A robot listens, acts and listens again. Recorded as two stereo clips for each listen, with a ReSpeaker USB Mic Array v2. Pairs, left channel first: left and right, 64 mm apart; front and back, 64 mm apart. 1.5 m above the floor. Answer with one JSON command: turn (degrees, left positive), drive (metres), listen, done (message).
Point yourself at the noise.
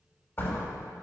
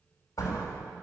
{"turn": 35}
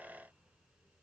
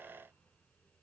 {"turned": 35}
{"done": "Facing where the door slam came from. I can't hear it now."}